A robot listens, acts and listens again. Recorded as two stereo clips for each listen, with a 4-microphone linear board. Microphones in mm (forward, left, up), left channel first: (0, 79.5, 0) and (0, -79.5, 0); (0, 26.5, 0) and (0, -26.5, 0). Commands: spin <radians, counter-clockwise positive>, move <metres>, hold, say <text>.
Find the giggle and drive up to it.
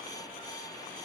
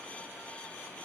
hold
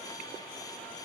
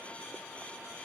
hold
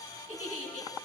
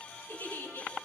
spin 0.79
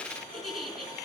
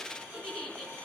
move 1.0
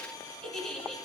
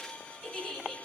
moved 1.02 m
move 1.0
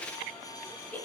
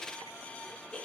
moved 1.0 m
spin 0.17
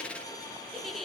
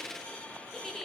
move 1.0
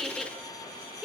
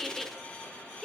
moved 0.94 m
move 1.0
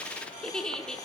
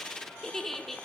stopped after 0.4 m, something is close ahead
say Arrived at the giggle, straight ahead.